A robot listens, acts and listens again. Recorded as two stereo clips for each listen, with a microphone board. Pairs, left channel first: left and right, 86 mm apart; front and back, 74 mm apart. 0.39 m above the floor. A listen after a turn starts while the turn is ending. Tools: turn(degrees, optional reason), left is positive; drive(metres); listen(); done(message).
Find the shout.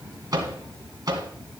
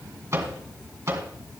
listen()
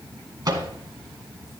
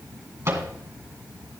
listen()
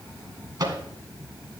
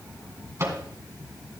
done("I can't make out a shout, only a microwave.")